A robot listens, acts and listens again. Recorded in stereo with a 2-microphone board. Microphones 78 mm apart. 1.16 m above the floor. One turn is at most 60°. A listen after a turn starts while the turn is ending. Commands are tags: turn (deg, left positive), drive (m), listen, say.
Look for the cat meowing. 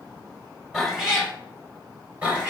<turn deg="-20"/>
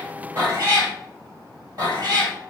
<turn deg="-60"/>
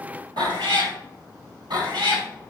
<turn deg="-60"/>
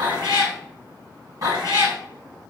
<turn deg="-50"/>
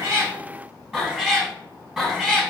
<say>Facing the cat meowing.</say>